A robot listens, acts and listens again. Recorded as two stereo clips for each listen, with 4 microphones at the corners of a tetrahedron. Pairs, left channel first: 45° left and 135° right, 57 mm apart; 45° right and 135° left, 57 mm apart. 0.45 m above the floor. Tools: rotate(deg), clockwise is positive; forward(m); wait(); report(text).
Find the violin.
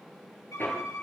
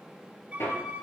rotate(-70)
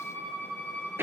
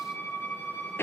rotate(10)
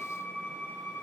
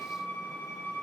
report("Found it: a violin, straight ahead, over 4 m away.")